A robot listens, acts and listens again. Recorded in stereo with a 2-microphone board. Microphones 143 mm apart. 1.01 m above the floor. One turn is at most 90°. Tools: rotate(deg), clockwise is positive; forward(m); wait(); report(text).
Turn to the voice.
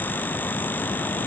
wait()
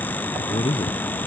rotate(-40)
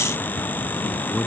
report("Facing the man speaking.")